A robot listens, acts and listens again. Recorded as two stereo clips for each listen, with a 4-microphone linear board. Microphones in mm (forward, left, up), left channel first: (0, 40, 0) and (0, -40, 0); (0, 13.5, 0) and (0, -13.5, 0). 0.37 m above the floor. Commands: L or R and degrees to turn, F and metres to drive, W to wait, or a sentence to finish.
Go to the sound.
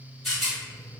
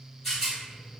L30
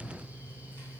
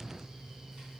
W
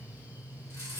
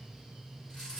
L150
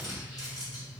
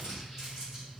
R10
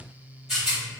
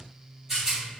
F1.0
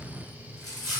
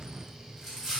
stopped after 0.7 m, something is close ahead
I am next to the rattle.